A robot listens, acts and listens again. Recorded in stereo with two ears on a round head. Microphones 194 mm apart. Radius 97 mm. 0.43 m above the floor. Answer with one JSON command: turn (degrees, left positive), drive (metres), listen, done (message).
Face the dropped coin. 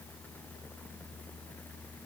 {"listen": true}
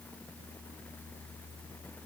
{"listen": true}
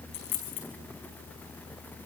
{"turn": 70}
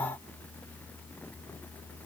{"listen": true}
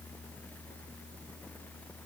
{"done": "I heard a dropped coin, but can't make it out now. It was about straight ahead or 40° left."}